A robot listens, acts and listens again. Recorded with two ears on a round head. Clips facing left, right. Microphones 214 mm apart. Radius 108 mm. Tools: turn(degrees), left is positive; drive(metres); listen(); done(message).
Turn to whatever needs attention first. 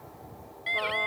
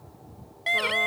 turn(degrees=-65)
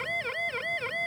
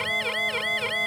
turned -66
turn(degrees=-45)
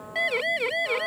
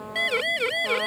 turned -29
turn(degrees=-15)
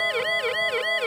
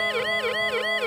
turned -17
done("Found it: a siren, straight ahead.")